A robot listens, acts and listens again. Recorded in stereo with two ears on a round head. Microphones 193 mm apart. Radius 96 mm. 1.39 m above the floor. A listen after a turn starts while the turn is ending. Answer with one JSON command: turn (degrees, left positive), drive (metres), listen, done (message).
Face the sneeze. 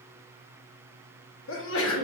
{"turn": 65}
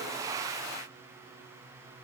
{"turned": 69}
{"listen": true}
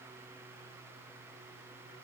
{"done": "I heard a sneeze, but can't make it out now. It was about 5° right or 45° left."}